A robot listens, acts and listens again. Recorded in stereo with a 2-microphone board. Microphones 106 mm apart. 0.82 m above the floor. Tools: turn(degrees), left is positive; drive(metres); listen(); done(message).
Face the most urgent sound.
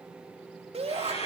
turn(degrees=-65)
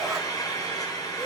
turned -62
listen()
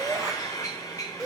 done("Facing the shout, 2 to 4 m away.")